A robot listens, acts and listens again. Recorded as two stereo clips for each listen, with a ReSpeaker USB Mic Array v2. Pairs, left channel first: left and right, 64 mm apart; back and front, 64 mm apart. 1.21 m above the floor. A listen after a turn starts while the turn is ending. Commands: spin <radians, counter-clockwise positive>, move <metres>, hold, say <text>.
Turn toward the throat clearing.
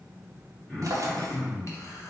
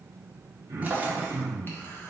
spin 0.35
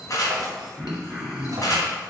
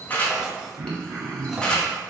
say Found it: throat clearing, straight ahead, 1 to 2 m away.